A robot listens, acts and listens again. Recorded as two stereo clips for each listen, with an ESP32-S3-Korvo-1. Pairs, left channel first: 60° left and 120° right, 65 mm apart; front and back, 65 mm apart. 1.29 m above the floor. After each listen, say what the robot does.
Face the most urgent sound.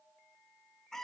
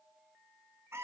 Keep listening.
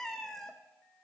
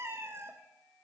Keep listening.
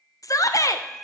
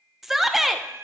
Turn 95° left.
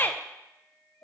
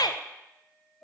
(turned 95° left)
Found it: a shout, straight ahead.